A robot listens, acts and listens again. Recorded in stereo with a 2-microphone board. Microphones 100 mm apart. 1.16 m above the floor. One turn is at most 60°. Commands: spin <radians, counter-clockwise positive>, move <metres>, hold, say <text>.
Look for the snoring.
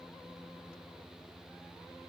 hold
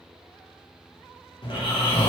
spin 0.96
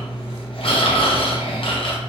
spin 1.05
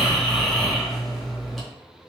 say Facing the snoring, under 1 m away.